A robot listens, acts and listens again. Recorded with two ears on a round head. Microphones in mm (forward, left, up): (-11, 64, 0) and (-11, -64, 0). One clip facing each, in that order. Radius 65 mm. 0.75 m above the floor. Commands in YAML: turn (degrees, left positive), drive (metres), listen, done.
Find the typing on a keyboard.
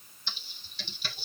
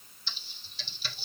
turn: 45
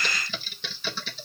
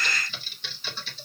turn: 80
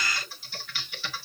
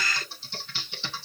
turn: -25
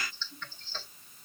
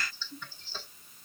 turn: -10
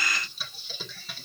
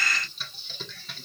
done: "Facing the typing on a keyboard, 1 to 2 m away."